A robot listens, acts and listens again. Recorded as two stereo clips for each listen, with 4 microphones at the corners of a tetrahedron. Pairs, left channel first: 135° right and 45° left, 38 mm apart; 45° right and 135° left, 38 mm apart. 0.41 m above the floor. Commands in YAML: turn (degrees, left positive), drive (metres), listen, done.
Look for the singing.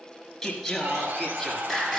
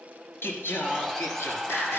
turn: -45
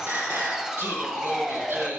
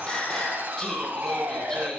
turn: 35
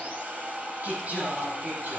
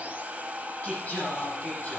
done: "Found it: singing, straight ahead, over 4 m away."